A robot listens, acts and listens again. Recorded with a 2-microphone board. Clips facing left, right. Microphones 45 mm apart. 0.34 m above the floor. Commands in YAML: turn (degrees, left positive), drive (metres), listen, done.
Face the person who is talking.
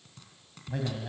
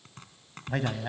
turn: -60
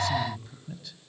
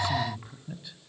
turn: -20
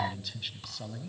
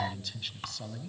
done: "Found it: a man speaking, straight ahead."